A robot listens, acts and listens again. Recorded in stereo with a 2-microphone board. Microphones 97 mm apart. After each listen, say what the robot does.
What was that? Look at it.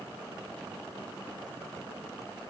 Keep listening.
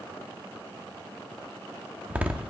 Turn 30° right.
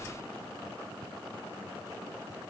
Keep listening.
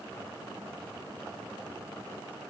I heard a door slam, but can't make it out now. It was about 15° left or 135° right.